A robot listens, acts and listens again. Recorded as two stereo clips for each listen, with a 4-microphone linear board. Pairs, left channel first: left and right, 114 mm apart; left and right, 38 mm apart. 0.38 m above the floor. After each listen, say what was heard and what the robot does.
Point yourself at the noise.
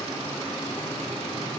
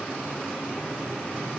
Keep listening.
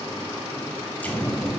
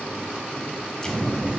Turn 30° left.
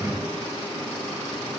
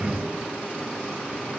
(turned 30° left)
So it is at 15° right. Turn 15° right.
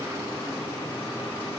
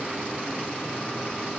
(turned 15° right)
Facing where the explosion came from. I can't hear it now.